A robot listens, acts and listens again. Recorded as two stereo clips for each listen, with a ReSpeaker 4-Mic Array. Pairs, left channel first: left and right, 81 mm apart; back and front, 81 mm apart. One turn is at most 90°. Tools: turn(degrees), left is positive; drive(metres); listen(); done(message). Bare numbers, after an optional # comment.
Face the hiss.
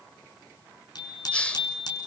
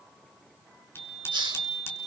# The hiss: 15° left.
turn(15)
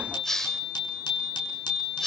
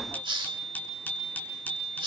done("Found it: a hiss, straight ahead, 1 to 2 m away.")